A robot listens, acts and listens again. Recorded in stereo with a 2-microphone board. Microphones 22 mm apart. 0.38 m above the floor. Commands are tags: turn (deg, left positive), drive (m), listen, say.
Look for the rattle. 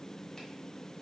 <listen/>
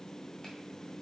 <listen/>
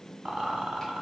<turn deg="-60"/>
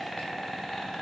<say>Found it: a rattle, straight ahead, 1 to 2 m away.</say>